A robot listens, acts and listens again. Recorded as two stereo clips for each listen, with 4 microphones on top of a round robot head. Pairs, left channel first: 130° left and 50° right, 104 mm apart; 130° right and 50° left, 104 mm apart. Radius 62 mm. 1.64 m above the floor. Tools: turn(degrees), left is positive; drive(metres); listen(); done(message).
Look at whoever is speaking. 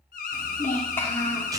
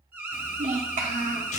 turn(degrees=60)
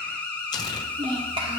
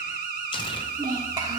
done("Facing the child speaking, 2 to 4 m away.")